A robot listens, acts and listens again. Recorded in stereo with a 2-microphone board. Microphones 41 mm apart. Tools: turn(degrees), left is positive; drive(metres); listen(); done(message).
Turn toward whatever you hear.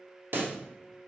turn(degrees=-60)
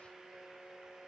listen()
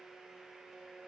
done("I heard a pop, but can't make it out now. It was about straight ahead or 60° right.")